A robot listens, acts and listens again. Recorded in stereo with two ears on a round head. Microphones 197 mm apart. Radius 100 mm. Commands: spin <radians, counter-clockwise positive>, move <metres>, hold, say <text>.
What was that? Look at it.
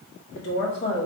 spin 0.87
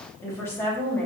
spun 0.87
say Found it: a woman speaking, straight ahead.